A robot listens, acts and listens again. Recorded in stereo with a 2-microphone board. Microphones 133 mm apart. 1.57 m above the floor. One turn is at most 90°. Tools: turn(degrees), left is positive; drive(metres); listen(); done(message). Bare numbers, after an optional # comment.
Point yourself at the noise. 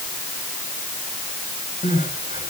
# The crying: about 70° left or 110° left.
turn(70)
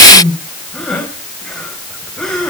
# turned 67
done("Facing the crying.")